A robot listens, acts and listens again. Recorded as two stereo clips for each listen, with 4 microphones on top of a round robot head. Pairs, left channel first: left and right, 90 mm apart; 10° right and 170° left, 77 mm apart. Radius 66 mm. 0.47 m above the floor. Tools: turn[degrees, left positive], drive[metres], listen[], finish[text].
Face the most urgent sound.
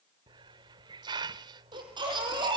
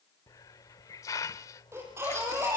Thought: The baby crying: 125° right.
Action: turn[-125]
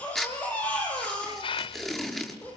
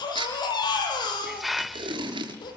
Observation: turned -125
Thought: The baby crying is now 15° left.
Action: turn[15]
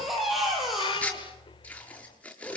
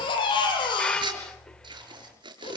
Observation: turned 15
Action: finish[Facing the baby crying.]